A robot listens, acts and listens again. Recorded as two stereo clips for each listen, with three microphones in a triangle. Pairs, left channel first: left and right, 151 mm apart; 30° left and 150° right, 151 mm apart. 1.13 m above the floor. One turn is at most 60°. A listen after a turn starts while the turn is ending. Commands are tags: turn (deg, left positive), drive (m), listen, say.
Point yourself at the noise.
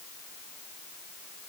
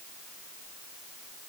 <listen/>
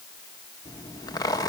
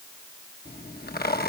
<turn deg="25"/>
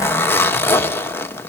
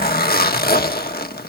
<turn deg="15"/>
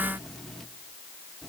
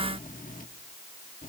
<say>Facing the zipper, 1 to 2 m away.</say>